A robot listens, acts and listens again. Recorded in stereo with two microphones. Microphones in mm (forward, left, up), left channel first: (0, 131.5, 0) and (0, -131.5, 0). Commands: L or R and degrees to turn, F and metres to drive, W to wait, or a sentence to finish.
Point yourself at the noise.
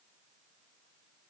W
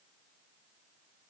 W
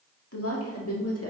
L65
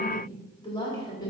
L15
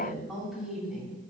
Found it: a woman speaking, straight ahead, 2 to 4 m away.